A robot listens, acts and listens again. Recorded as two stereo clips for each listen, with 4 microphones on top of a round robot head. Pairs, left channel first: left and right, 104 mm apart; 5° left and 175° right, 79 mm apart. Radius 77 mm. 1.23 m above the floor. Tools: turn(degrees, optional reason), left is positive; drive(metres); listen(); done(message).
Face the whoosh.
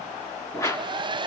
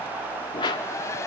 turn(degrees=30, reason="The whoosh: 30° left.")
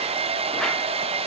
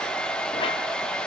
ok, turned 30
listen()
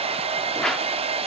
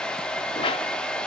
done("Found it: a whoosh, straight ahead.")